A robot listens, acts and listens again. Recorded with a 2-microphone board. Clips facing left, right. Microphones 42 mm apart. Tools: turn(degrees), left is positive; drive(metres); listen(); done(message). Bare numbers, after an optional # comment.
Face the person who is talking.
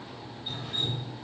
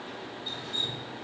listen()
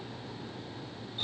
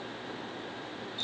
listen()
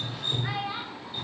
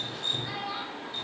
# The child speaking: about 40° left or 140° left.
turn(40)
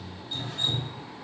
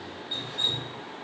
listen()
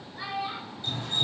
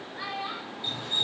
# So it is at 15° right.
turn(-15)
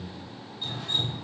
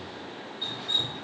listen()
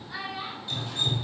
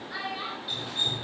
# The child speaking is now 10° right.
turn(-10)
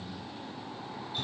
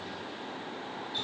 listen()
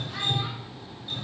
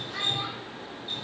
listen()
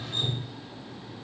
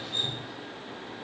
done("I heard a child speaking from this way, but can't make it out now.")